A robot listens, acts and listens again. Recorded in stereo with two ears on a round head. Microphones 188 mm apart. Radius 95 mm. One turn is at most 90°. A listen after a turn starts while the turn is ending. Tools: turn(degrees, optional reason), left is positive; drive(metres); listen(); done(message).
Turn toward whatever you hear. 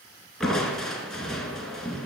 turn(degrees=30)
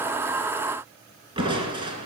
turn(degrees=-25, reason="So it is at 25° right.")
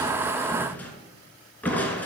turn(degrees=10, reason="The crushing is now 10° left.")
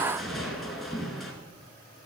done("Facing the crushing, 2 to 4 m away.")